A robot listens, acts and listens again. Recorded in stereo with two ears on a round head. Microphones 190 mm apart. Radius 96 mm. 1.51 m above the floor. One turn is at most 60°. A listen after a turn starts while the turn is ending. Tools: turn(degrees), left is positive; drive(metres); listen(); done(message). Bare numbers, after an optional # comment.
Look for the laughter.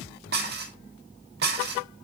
listen()
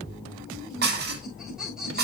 turn(-30)
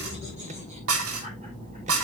# So it is at 145° right.
turn(-60)
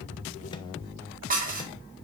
# Nothing new. It was at 85° right.
turn(-60)
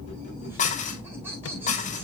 # The laughter is now 10° right.
turn(-10)
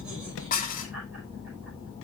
listen()
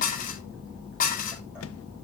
listen()
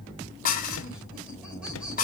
done("Facing where the laughter came from. I can't hear it now.")